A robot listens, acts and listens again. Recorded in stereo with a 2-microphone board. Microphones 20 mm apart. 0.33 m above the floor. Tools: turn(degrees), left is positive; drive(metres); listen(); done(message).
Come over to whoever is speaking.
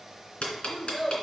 turn(degrees=25)
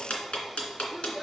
drive(metres=1.0)
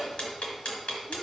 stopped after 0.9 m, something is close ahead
listen()
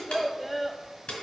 done("I am next to the child speaking.")